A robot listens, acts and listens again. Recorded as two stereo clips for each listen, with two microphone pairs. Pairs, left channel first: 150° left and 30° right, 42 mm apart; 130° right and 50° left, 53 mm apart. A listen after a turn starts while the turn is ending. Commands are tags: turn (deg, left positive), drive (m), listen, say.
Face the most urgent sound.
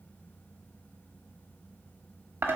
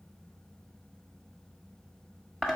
<listen/>
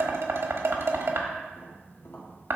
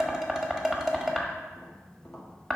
<listen/>
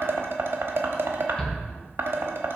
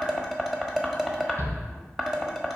<turn deg="75"/>
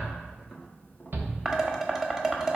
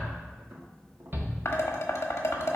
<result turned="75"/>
<say>Found it: a shout, straight ahead, 1 to 2 m away.</say>